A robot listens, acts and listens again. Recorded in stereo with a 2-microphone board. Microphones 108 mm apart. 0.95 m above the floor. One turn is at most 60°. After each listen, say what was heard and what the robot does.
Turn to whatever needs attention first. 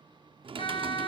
The siren: about 55° left or 125° left. Turn 55° left.
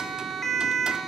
Facing the siren, 2 to 4 m away.